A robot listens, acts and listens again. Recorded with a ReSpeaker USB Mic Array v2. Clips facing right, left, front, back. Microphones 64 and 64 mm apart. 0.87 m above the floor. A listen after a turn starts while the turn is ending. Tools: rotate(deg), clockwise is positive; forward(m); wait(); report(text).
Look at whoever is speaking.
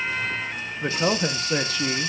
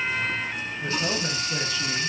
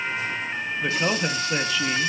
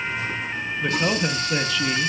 rotate(90)
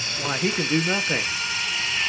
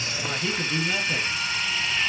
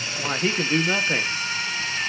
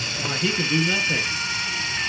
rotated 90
rotate(50)
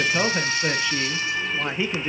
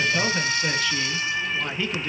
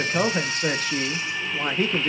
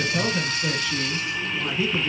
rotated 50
rotate(25)
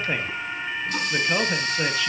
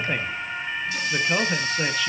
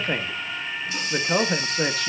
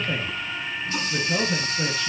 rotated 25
report("Facing the man speaking.")